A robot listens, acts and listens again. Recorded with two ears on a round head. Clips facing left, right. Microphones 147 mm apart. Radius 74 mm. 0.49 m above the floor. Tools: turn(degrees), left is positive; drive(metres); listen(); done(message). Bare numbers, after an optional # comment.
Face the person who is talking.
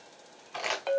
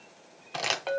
listen()
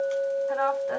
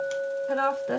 # The woman speaking: about 40° right or 140° right.
turn(-40)
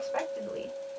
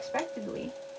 # So it is at 10° right.
turn(-10)
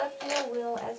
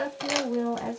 done("Found it: a woman speaking, straight ahead.")